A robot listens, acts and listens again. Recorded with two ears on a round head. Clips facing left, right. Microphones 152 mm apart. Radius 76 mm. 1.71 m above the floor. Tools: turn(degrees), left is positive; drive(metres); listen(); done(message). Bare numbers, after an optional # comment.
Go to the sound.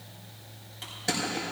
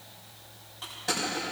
# The crushing: about 20° left or 160° left.
turn(20)
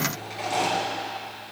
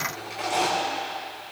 drive(1.0)
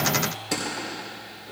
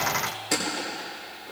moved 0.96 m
drive(1.0)
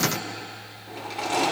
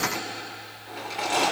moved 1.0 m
drive(1.0)
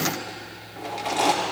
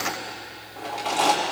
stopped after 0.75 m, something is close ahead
# The crushing is now 10° left.
turn(10)
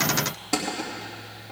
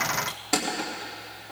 done("I am next to the crushing.")